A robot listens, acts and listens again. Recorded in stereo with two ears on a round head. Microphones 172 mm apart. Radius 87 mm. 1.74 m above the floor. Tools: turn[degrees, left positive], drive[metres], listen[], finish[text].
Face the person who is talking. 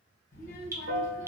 Thought: The child speaking: about 45° left or 135° left.
Action: turn[45]
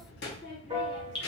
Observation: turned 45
Thought: So it is at 85° left.
Action: turn[85]
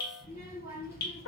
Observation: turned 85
Thought: The child speaking is now 15° right.
Action: turn[-15]
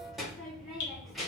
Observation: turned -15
Action: finish[Found it: a child speaking, straight ahead.]